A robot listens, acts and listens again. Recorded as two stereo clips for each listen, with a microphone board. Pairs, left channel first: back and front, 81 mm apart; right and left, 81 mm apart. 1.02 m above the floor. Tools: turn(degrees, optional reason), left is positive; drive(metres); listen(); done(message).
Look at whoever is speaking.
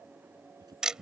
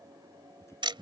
turn(degrees=-35, reason="The man speaking: 35° right.")
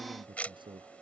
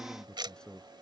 turn(degrees=-10, reason="The man speaking is now 10° right.")
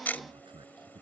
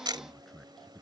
done("Facing the man speaking.")